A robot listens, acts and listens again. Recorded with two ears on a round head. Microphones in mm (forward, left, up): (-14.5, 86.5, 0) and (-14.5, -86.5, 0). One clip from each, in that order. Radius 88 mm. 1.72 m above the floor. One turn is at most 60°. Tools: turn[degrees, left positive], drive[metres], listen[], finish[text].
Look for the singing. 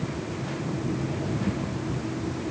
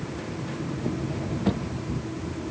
Action: listen[]
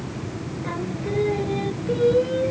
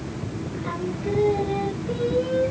Action: turn[30]
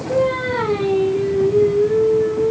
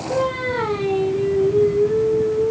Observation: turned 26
Thought: The singing: about 20° left or 160° left.
Action: turn[20]
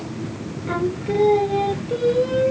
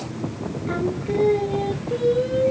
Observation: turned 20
Action: turn[30]
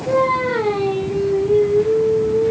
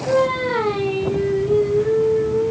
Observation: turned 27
Thought: So it is at 20° right.
Action: turn[-20]
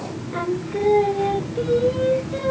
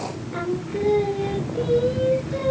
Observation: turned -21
Action: finish[Found it: singing, straight ahead, 1 to 2 m away.]